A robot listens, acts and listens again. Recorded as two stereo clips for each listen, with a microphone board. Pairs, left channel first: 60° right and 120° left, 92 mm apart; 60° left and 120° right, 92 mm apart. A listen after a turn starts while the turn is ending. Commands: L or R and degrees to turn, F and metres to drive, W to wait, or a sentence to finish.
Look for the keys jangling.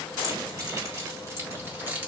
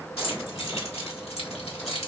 L50
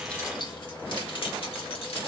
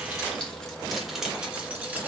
R50
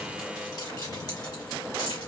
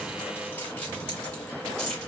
R25
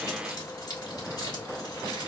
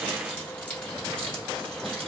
R20
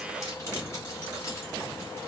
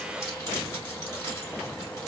W
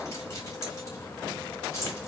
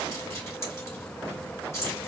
Facing the keys jangling, 2 to 4 m away.